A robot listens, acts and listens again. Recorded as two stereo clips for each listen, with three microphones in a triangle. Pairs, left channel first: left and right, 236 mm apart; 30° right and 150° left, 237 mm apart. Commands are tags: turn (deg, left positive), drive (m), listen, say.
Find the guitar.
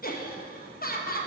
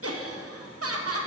<listen/>
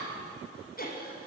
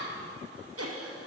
<listen/>
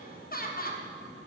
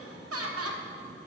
<say>I can't make out a guitar, only laughter.</say>